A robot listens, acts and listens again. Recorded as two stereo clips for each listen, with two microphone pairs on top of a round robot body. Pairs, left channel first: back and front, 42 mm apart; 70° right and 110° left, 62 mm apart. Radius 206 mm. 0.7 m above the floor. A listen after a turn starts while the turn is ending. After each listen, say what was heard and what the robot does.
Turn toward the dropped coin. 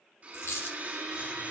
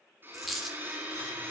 The dropped coin: 160° right. Turn 160° right.
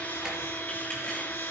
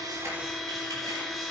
Facing where the dropped coin came from. I can't hear it now.